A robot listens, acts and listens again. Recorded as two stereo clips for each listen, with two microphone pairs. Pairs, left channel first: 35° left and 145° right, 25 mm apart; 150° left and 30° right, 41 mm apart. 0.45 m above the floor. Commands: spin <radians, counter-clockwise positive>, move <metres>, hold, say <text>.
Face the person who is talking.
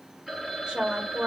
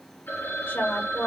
spin 2.97
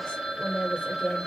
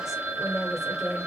spin 1.31
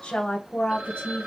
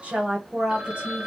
spin 0.61
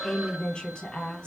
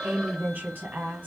say Found it: a woman speaking, straight ahead, 1 to 2 m away.